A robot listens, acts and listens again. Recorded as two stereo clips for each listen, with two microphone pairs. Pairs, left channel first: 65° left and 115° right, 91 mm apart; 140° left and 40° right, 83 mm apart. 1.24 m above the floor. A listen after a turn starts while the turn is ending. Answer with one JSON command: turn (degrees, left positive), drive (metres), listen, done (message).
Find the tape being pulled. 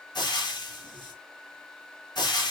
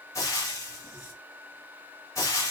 {"listen": true}
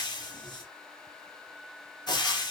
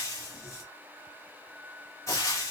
{"listen": true}
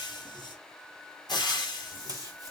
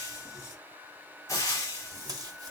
{"turn": -70}
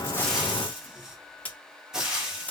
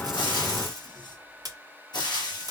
{"done": "Facing the tape being pulled."}